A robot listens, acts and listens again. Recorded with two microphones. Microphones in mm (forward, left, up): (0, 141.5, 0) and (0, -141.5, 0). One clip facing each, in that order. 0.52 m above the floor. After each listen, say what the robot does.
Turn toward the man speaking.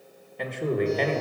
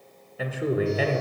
Turn 30° right.
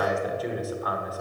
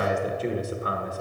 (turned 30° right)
Turn 145° right.
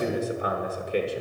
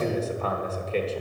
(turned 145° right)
Turn 15° left.
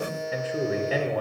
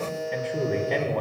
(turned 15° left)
Found it: a man speaking, straight ahead.